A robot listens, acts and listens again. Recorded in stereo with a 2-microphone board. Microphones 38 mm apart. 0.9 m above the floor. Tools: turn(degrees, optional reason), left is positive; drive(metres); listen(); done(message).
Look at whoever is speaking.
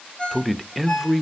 turn(degrees=30)
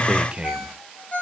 turn(degrees=-30, reason="So it is at 30° right.")
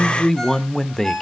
turn(degrees=15, reason="The man speaking is now 15° left.")
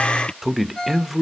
done("Found it: a man speaking, straight ahead, under 1 m away.")